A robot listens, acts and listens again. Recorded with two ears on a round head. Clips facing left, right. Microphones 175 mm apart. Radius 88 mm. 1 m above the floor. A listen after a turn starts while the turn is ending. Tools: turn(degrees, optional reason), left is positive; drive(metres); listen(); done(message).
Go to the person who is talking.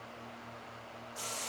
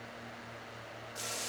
listen()
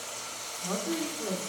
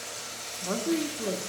turn(degrees=-50, reason="The woman speaking: about 50° right or 130° right.")
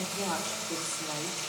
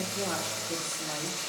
listen()
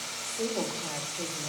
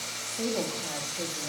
turn(degrees=-10, reason="So it is at 10° right.")
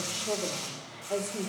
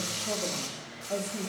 drive(metres=1.0)
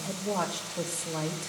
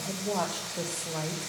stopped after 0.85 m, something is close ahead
done("I am next to the woman speaking.")